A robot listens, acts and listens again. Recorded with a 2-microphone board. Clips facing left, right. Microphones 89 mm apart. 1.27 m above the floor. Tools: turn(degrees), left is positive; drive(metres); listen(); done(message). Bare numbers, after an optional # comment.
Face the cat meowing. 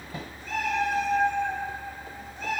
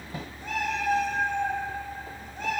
# The cat meowing: about 50° right or 130° right.
turn(-50)
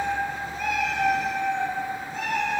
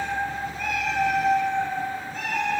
# So it is at 30° left.
turn(30)
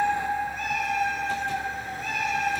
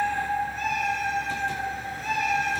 # The cat meowing is now 15° left.
turn(15)
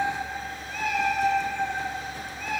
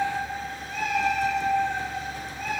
done("Found it: a cat meowing, straight ahead.")